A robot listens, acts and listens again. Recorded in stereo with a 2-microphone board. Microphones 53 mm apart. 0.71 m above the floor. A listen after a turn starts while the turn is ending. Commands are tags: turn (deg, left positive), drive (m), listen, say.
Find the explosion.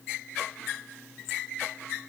<listen/>
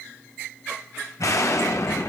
<turn deg="75"/>
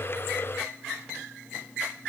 <listen/>
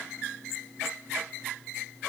<say>I heard an explosion, but can't make it out now. It was about straight ahead or 30° left.</say>